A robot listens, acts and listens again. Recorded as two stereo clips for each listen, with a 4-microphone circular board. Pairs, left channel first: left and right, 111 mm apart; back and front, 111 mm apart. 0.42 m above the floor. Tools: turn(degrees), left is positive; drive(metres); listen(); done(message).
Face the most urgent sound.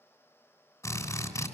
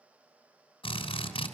listen()
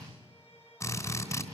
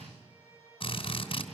listen()
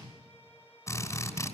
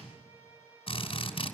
done("I can't make out anything urgent to turn to.")